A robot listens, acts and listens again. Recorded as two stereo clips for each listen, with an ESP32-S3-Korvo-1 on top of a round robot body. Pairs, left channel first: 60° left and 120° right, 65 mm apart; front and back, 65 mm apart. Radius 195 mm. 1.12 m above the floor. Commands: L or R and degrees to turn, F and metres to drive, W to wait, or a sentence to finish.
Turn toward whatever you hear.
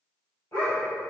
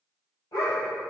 L20
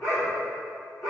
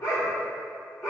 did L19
L35
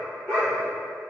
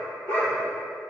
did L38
L10
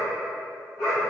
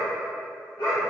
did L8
L25
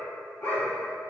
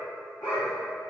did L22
L10
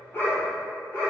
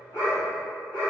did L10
Facing the dog barking, 2 to 4 m away.